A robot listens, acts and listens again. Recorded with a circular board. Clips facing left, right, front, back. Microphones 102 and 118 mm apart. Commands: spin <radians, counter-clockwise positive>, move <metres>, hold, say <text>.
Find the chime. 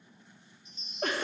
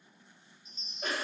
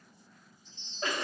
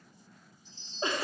spin -2.36
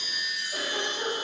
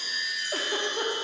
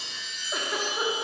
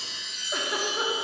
spin 0.44
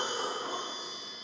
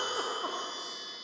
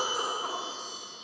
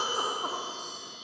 hold
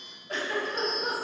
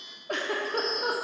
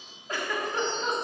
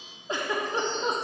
say Found it: a chime, straight ahead.